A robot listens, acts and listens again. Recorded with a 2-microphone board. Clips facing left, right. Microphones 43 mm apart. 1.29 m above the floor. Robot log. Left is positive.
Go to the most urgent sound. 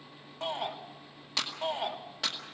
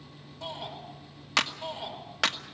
note: The shout: about 50° left or 130° left.
cmd yaw +50
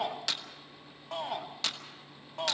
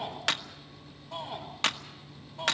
note: So it is at 80° left.
cmd yaw +80
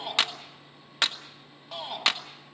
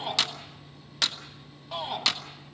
cmd fwd 1.0
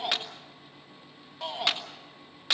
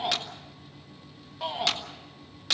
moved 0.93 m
cmd fwd 1.0
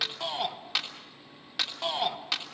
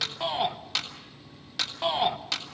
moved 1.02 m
note: The shout is now 15° right.
cmd yaw -15
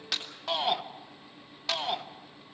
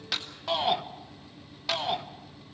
cmd fwd 1.0
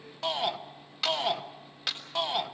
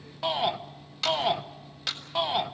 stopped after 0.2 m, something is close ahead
note: The shout is now 10° right.
cmd yaw -10
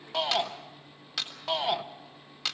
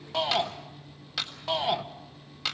end: Arrived at the shout, straight ahead.